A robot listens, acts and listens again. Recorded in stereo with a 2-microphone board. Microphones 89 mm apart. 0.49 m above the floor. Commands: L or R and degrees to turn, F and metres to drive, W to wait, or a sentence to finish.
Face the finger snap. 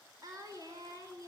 W
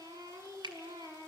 R60
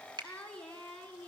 R60
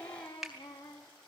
Facing the finger snap.